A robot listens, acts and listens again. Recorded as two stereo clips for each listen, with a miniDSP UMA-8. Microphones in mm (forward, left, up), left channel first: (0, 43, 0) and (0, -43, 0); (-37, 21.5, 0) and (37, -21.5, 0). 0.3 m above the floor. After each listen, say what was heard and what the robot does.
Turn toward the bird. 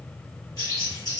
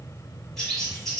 The bird: 65° left. Turn 65° left.
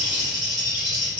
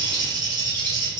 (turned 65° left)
The bird is now 10° right. Turn 10° right.
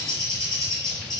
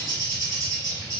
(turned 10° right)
Found it: a bird, straight ahead, 1 to 2 m away.